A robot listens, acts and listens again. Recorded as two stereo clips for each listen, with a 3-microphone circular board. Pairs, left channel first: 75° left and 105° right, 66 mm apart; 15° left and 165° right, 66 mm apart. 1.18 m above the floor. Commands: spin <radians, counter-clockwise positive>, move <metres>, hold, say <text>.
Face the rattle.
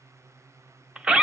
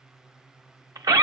hold
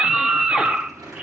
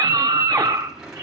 spin -1.48
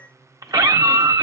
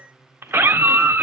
hold
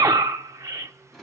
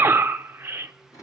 spin -0.26
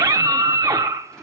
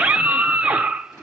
hold
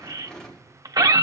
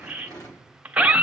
say Facing the rattle.